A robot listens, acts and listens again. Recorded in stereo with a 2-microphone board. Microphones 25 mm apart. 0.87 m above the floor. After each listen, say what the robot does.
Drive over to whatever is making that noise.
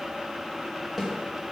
Turn 20° right.
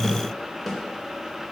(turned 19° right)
Drive 1.0 m forward.
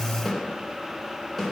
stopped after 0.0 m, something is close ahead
Something is in my way. I am facing the snare drum but have not reached it.